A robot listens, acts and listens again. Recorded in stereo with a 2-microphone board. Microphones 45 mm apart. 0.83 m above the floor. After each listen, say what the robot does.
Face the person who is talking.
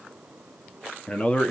Turn 30° left.
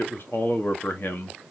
Turn 115° left.
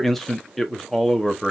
Found it: a man speaking, straight ahead, 1 to 2 m away.